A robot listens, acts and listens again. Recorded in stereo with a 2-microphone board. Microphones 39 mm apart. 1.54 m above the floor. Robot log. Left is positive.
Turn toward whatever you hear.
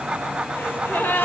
note: The gasp: about 60° left or 120° left.
cmd yaw +60
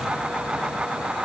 cmd idle
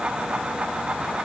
end: I heard a gasp, but can't make it out now. It was about straight ahead or 60° left.